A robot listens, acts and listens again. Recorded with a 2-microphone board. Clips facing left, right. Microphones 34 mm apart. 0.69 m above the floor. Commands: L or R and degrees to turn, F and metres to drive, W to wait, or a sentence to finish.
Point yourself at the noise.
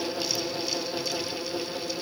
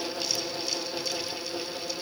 W
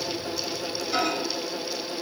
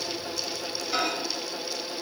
R30
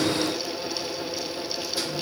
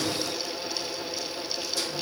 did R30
W
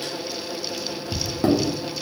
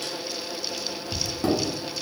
L20
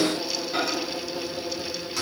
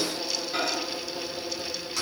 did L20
Facing the microwave, under 1 m away.